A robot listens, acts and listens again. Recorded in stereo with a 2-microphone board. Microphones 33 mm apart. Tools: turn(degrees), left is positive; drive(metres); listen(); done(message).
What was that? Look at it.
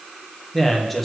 turn(degrees=30)
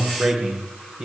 turn(degrees=-25)
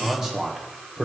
turn(degrees=-10)
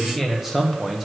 done("Facing the man speaking, 1 to 2 m away.")